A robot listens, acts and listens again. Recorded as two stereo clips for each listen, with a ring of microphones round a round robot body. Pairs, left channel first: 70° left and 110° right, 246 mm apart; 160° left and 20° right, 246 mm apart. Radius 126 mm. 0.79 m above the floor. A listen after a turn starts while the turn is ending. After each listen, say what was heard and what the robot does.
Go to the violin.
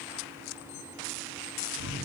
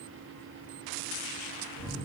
Keep listening.
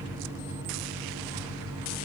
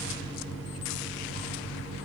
Keep listening.
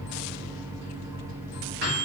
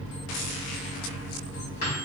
I can't make out a violin to turn to.